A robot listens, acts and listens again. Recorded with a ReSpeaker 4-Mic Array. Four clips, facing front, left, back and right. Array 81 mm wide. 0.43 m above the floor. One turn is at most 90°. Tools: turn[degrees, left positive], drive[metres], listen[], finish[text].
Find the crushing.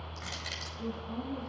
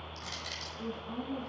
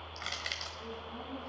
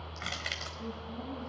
Thought: The crushing: 110° right.
Action: turn[-90]
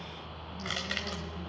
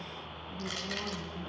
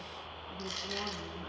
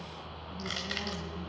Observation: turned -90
Thought: The crushing is now 20° right.
Action: turn[-20]
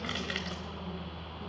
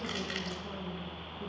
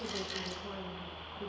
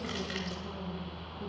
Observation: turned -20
Action: finish[Facing the crushing.]